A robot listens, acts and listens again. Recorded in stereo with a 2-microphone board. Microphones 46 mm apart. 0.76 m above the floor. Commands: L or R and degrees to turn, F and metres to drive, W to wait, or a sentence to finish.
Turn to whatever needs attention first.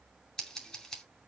W
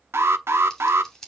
R60
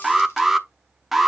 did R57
Found it: an alarm, straight ahead.